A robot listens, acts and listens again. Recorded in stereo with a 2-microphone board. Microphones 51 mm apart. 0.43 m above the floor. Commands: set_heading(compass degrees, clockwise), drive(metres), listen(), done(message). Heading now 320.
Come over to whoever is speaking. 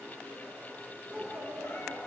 set_heading(50)
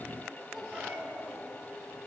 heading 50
drive(1.0)
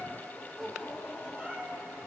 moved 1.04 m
drive(1.0)
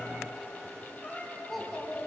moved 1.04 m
drive(1.0)
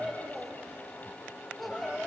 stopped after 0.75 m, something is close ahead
done("Arrived at the child speaking, straight ahead.")